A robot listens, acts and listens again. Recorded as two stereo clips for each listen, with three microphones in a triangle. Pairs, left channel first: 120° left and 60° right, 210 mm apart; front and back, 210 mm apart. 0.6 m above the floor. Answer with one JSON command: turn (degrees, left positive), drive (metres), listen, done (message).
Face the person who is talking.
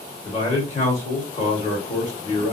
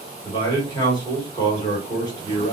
{"turn": 65}
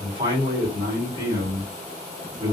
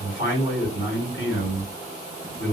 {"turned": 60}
{"done": "Found it: a man speaking, straight ahead, 2 to 4 m away."}